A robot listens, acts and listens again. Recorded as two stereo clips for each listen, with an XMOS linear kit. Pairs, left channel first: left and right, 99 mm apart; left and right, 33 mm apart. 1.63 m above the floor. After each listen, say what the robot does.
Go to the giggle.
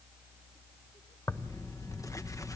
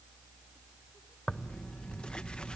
Keep listening.
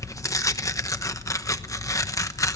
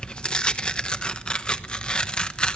Keep listening.
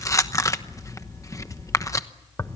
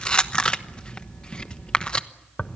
I can't make out a giggle to turn to.